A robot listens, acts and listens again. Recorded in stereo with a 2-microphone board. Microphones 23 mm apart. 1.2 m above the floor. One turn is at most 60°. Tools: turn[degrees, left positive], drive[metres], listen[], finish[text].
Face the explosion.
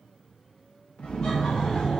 Action: turn[60]
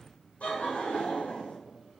Thought: Nothing new. It was at 30° left.
Action: turn[30]
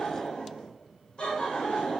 Action: finish[Facing where the explosion came from. I can't hear it now.]